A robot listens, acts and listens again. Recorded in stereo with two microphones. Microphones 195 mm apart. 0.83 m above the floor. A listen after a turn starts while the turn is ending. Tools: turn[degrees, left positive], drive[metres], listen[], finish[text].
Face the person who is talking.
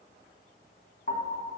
Action: listen[]
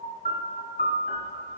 Action: listen[]
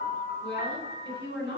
Action: turn[90]
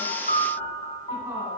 Action: listen[]
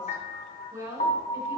Thought: The woman speaking is now 10° right.
Action: turn[-10]
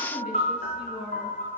Action: finish[Found it: a woman speaking, straight ahead.]